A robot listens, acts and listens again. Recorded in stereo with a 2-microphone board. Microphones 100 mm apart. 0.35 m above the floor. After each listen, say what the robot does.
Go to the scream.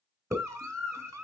Turn 30° right.
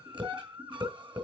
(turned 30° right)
Turn 125° right.
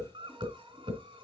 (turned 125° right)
Turn 55° right.
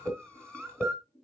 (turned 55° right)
Turn 10° left.
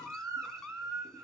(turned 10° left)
Drive 1.0 m forward.
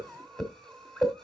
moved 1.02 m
Drive 1.0 m forward.
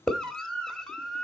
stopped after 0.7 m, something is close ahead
Turn 10° left.
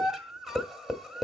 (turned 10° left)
Arrived at the scream, straight ahead.